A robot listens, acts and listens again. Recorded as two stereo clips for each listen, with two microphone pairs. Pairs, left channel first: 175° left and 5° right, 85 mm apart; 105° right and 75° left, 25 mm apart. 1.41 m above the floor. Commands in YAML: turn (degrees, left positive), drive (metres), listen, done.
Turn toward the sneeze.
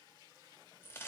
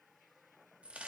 listen: true
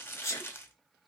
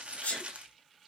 turn: -130
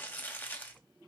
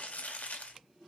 done: "I heard a sneeze from this way, but can't make it out now."